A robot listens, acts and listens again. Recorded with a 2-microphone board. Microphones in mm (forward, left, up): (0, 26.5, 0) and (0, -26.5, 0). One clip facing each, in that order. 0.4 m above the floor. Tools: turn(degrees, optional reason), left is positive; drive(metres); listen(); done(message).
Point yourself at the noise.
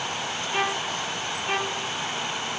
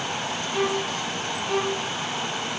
turn(degrees=45, reason="The violin: about 45° left or 135° left.")
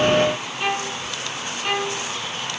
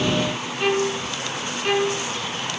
done("Found it: a violin, straight ahead.")